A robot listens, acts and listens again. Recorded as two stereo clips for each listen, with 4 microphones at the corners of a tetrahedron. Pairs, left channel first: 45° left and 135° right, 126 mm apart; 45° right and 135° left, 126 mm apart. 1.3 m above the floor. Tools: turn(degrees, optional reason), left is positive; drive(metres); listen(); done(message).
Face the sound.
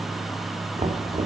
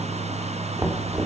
turn(degrees=-160, reason="The knocking: 160° right.")
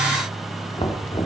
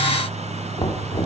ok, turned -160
done("Found it: knocking, straight ahead.")